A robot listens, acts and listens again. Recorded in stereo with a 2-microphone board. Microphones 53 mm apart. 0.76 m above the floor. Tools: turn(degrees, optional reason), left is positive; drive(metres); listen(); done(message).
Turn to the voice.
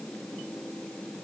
listen()
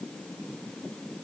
listen()
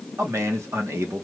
turn(degrees=-60, reason="The man speaking: about 60° right or 120° right.")
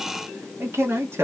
turn(degrees=-55, reason="So it is at 55° right.")
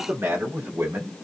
turn(degrees=-50, reason="The man speaking is now 50° right.")
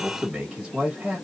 turn(degrees=-10, reason="The man speaking is now 10° right.")
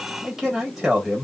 done("Facing the man speaking, 1 to 2 m away.")